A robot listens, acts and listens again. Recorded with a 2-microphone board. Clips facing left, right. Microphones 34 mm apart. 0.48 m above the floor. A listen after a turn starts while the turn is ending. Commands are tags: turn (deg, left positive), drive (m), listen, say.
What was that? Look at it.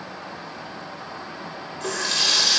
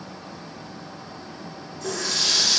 <turn deg="60"/>
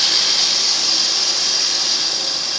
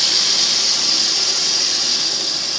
<turn deg="15"/>
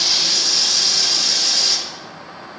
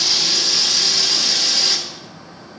<say>Found it: a running tap, straight ahead.</say>